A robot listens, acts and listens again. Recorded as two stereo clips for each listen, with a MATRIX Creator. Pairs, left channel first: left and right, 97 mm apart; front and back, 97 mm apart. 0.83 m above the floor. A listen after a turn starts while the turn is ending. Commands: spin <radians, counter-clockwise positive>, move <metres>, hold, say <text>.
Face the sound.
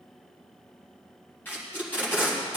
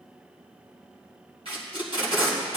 spin 2.79
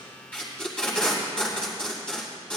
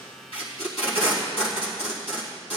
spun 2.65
say Facing the tape being pulled.